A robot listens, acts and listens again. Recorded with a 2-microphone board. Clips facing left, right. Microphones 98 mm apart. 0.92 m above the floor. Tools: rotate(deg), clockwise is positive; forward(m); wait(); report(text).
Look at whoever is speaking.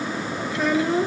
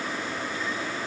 rotate(-90)
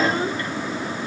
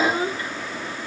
rotate(15)
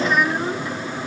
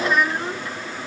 report("Facing the child speaking.")